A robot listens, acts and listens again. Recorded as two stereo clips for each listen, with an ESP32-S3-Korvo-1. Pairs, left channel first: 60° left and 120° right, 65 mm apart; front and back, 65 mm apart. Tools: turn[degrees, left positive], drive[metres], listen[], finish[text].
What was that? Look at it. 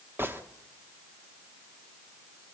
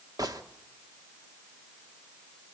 Thought: The gunshot: 175° right.
Action: turn[-175]
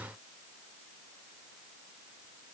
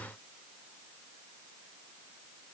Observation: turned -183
Action: finish[I heard a gunshot from this way, but can't make it out now.]